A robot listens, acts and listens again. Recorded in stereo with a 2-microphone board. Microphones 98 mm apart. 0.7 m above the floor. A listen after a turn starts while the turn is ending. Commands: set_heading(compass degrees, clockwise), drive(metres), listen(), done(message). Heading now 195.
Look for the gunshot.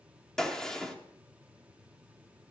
set_heading(165)
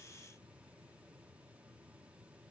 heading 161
listen()
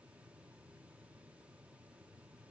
done("I heard a gunshot, but can't make it out now. It was about 30° right or 140° left.")